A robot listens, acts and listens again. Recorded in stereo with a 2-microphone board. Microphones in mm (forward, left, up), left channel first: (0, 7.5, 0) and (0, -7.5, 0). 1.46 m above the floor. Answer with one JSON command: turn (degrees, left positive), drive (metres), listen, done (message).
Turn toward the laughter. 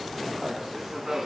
{"turn": -35}
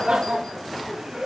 {"turn": -130}
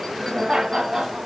{"turn": -40}
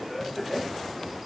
{"turn": -10}
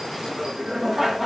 {"turn": -10}
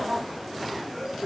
{"done": "Facing the laughter, 2 to 4 m away."}